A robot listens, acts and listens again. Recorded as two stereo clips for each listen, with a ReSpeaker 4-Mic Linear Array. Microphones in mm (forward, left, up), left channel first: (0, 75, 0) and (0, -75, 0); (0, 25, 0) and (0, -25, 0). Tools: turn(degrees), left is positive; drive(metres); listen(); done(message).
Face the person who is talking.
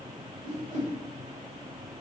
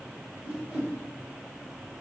listen()
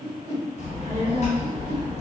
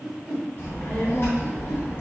turn(degrees=50)
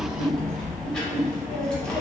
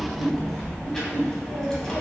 done("Found it: a child speaking, straight ahead, 1 to 2 m away.")